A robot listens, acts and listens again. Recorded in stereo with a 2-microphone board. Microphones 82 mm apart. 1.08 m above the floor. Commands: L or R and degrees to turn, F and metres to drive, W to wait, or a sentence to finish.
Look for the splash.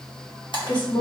L70
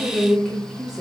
W
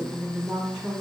I heard a splash, but can't make it out now. It was about straight ahead or 40° left.